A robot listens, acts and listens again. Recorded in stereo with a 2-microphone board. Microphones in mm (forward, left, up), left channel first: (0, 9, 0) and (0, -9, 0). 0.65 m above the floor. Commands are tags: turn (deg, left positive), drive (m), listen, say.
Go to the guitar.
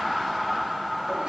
<listen/>
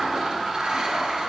<listen/>
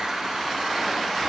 <say>I can't make out a guitar to turn to.</say>